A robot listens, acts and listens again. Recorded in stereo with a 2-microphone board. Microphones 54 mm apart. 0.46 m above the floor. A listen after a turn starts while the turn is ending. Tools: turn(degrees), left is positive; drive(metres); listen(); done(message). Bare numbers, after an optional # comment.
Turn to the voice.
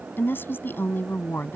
# The woman speaking: about 40° left or 140° left.
turn(40)
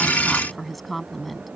done("Facing the woman speaking.")